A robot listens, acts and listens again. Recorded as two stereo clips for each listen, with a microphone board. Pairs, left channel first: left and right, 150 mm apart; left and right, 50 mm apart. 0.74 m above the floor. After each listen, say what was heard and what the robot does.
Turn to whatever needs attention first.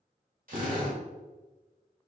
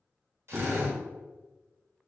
Keep listening.
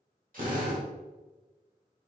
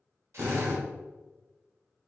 Keep listening.
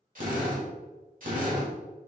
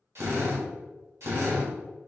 I can't make out anything urgent, only a drill.